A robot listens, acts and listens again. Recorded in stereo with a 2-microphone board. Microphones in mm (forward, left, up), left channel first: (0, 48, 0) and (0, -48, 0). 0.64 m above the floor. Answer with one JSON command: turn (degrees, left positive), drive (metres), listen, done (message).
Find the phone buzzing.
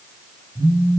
{"turn": -70}
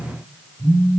{"turn": -40}
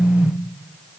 {"turn": -10}
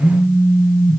{"done": "Found it: a phone buzzing, straight ahead, over 4 m away."}